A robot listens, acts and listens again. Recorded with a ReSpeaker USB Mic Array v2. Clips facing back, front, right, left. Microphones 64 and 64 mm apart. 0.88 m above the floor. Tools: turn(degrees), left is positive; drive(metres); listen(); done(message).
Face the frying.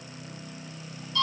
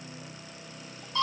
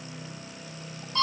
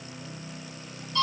listen()
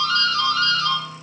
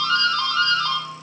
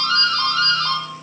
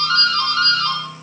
listen()
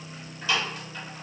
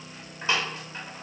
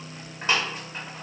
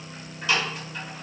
done("I can't make out frying, only a doorbell.")